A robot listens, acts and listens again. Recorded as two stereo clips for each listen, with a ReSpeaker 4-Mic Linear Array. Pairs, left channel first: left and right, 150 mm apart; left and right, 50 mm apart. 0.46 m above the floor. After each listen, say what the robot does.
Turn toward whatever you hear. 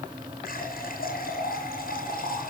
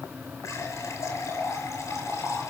Turn 90° left.
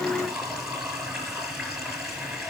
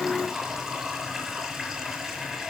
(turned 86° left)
Found it: a running tap, straight ahead.